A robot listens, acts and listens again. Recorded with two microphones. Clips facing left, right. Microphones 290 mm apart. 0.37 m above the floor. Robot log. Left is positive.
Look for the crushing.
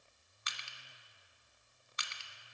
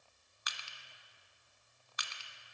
note: The crushing: about 30° left or 150° left.
cmd yaw +30
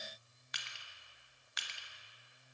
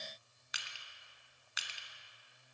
end: Facing the crushing.